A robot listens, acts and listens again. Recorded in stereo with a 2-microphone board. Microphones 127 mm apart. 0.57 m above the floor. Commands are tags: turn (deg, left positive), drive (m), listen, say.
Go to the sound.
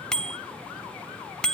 <turn deg="30"/>
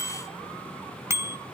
<turn deg="-25"/>
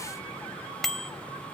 <drive m="1.0"/>
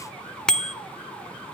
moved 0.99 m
<drive m="1.0"/>
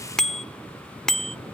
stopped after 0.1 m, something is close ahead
<say>Arrived at the bicycle bell, straight ahead.</say>